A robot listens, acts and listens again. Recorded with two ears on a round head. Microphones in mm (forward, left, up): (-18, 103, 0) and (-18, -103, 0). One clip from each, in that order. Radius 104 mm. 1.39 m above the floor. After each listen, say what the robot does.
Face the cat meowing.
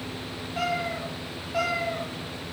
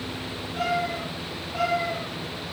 Turn 30° left.
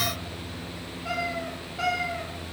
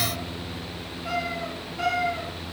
Turn 15° left.
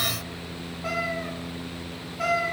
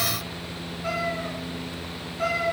Turn 15° left.
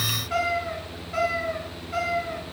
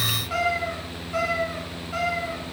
Found it: a cat meowing, straight ahead, 2 to 4 m away.